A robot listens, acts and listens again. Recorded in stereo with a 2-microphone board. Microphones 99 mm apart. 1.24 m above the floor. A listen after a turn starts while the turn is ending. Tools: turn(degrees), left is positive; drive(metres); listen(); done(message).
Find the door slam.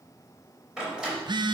turn(degrees=-30)
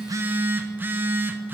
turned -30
listen()
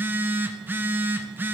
done("I heard a door slam, but can't make it out now. It was about 25° left or 145° right.")